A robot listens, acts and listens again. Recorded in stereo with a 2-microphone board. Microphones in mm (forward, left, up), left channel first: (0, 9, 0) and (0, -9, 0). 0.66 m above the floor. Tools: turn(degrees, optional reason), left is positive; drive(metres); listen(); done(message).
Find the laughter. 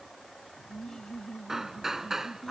turn(degrees=25, reason="The laughter: about 25° left or 155° left.")
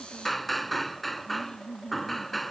turn(degrees=40, reason="The laughter: about 40° left or 140° left.")
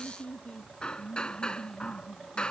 turn(degrees=115, reason="So it is at 115° left.")
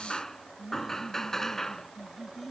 done("Found it: laughter, straight ahead.")